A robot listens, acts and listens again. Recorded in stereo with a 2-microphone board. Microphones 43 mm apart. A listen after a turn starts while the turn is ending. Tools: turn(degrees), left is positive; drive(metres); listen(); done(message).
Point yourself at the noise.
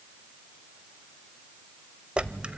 turn(degrees=-25)
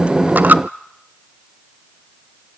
turn(degrees=-125)
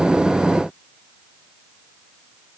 done("I heard a dropped coin from this way, but can't make it out now.")